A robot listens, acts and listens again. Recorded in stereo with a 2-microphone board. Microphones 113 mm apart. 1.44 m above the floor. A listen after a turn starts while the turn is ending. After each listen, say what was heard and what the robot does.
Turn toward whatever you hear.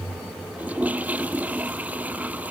Turn 30° right.
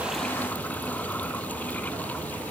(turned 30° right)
Keep listening.
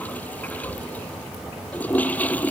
So it is at 15° left. Turn 15° left.
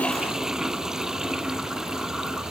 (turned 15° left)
Found it: a toilet flushing, straight ahead.